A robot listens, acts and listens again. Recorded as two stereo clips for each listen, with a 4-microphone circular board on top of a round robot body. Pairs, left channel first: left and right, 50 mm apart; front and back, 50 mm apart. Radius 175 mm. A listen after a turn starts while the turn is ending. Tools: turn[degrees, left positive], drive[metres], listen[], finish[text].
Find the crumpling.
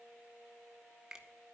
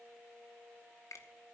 Action: listen[]
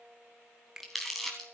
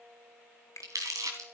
Thought: The crumpling: straight behind.
Action: turn[180]
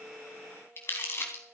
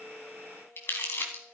Thought: The crumpling is now 45° left.
Action: turn[45]
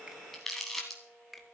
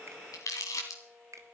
Action: finish[Facing the crumpling, 2 to 4 m away.]